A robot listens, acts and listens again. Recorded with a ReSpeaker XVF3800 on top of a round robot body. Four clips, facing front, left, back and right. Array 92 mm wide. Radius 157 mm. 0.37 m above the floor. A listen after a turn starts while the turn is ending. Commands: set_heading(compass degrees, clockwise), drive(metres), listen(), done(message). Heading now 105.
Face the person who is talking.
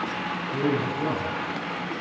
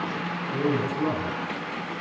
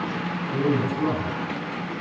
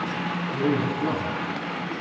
set_heading(315)
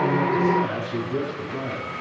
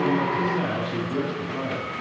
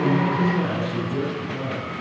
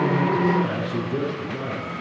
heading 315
set_heading(260)
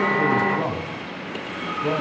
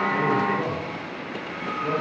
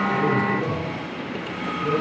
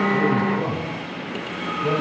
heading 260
set_heading(270)
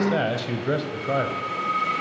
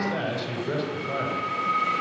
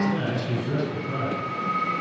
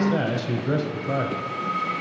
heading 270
set_heading(280)
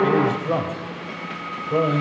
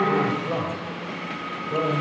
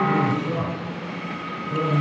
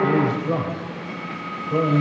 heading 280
done("Facing the man speaking.")